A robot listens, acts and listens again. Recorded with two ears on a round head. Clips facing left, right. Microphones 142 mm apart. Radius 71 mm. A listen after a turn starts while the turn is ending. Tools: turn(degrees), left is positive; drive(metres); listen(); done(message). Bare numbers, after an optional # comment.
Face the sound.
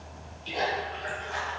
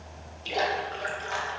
# The splash: about 70° right or 110° right.
turn(-70)
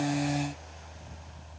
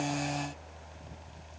listen()
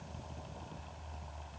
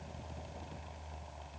done("I heard a splash, but can't make it out now. It was about straight ahead or 40° right.")